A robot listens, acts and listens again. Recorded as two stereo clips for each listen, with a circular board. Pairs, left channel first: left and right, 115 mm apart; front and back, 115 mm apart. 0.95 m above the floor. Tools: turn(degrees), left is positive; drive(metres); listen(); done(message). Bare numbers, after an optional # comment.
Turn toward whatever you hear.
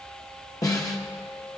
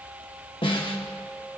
# The snare drum: 35° left.
turn(35)
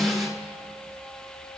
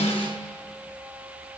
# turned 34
done("Found it: a snare drum, straight ahead.")